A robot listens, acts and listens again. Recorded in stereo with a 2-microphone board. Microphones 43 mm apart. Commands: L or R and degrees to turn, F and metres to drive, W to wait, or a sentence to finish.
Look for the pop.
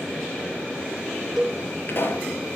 L50
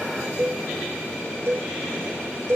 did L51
W
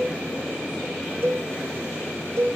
I heard a pop, but can't make it out now. It was about straight ahead or 80° left.